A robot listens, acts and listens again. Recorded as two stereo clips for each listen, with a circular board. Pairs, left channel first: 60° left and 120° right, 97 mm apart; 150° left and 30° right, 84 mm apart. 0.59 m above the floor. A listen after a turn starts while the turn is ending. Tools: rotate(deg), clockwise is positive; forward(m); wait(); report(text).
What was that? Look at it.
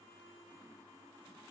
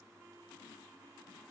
wait()
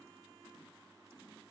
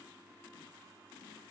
wait()
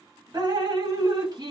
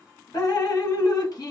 rotate(165)
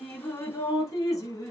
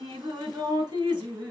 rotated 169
report("Facing the dripping.")